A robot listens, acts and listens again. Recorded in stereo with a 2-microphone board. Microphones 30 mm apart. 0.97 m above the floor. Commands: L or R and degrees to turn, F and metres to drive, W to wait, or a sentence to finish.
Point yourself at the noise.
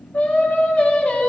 L60
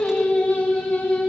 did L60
L70
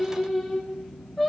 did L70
L15
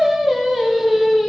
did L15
Facing the singing.